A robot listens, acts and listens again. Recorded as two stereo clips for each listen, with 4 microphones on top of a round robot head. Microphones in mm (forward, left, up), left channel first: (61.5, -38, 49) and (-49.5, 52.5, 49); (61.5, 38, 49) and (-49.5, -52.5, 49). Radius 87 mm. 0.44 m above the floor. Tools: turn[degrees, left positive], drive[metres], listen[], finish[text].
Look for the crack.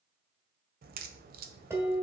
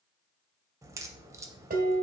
Thought: The crack: 150° left.
Action: turn[150]
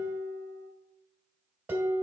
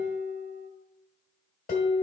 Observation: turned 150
Action: finish[Facing where the crack came from. I can't hear it now.]